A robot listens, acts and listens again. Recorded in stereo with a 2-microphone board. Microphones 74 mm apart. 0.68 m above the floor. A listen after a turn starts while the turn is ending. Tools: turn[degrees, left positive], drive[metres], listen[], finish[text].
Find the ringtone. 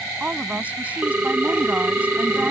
Thought: The ringtone: about 20° right or 160° right.
Action: turn[-20]
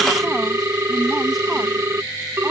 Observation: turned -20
Thought: So it is at 140° right.
Action: turn[-140]
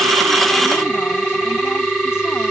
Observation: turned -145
Action: finish[Facing the ringtone.]